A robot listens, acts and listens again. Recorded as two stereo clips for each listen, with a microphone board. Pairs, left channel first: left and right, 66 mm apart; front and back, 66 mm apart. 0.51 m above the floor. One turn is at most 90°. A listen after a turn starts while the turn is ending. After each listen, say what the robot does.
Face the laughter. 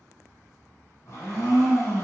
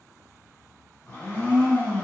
Keep listening.
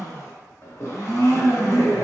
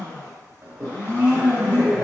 Turn 90° left.
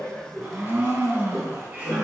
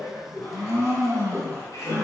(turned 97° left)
Turn 25° right.
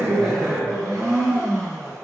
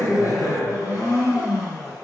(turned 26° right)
Turn 10° right.
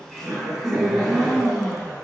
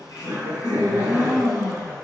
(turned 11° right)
Facing the laughter.